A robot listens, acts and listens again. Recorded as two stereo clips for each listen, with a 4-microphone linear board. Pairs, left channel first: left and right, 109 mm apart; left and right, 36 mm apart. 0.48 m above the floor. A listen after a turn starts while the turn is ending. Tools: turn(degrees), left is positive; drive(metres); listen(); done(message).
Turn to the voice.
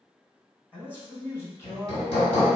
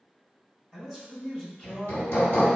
turn(degrees=25)
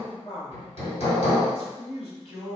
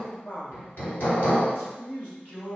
turn(degrees=115)
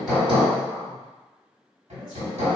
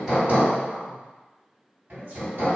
turn(degrees=-55)
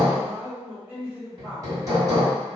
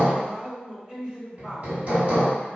turn(degrees=-15)
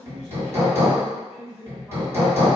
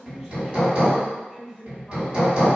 done("Facing the man speaking.")